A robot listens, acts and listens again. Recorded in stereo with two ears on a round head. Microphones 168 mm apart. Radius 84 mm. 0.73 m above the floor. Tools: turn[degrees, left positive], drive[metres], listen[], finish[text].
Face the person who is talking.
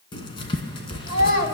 Thought: The child speaking: about 50° left or 130° left.
Action: turn[50]
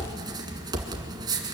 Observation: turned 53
Action: listen[]
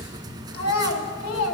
Thought: So it is at 80° left.
Action: turn[80]
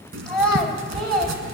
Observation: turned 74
Action: finish[Facing the child speaking, 2 to 4 m away.]